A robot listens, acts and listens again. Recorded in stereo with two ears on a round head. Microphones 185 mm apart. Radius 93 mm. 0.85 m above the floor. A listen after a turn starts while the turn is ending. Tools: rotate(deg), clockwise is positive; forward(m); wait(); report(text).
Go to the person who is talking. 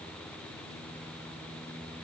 wait()
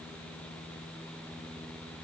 wait()
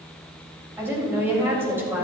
rotate(30)
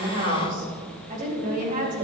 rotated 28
rotate(140)
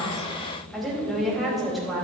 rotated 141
forward(1.0)
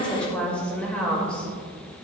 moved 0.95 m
forward(1.0)
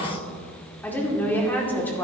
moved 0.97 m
rotate(-10)
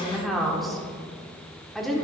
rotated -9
forward(1.0)
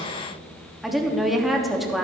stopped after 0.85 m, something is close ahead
report("I am next to the woman speaking.")